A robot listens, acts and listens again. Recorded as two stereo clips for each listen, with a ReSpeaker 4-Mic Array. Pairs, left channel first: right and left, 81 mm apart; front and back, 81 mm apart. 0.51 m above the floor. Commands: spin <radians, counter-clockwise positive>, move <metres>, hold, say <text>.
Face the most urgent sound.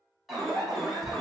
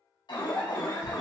say Found it: an alarm, straight ahead, 1 to 2 m away.